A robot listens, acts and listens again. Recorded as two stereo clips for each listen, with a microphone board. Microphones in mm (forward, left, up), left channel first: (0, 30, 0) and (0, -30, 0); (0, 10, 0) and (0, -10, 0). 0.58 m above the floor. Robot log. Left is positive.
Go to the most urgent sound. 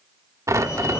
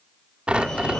note: The fire alarm: about 50° left or 130° left.
cmd yaw +50
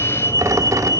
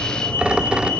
note: So it is at 75° left.
cmd yaw +75
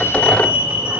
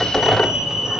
note: The fire alarm is now 15° right.
cmd yaw -15
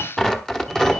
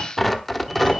cmd fwd 1.0
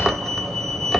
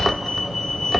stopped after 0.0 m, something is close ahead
end: Blocked. The fire alarm is further on, straight ahead.